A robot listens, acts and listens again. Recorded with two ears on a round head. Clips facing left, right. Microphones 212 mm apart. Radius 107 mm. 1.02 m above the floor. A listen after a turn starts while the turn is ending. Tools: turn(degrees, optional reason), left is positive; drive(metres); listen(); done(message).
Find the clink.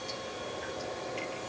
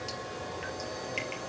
listen()
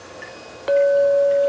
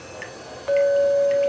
turn(degrees=55, reason="The clink: about 55° left or 125° left.")
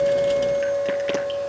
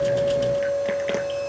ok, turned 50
done("Found it: a clink, straight ahead, under 1 m away.")